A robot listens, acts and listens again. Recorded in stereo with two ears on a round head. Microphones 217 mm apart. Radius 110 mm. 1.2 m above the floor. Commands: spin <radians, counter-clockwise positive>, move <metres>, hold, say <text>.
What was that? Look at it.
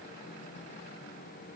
hold
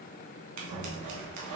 spin -1.57
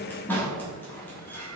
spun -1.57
spin 0.17
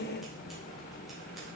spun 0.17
hold
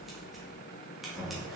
say Found it: scissors, straight ahead, 1 to 2 m away.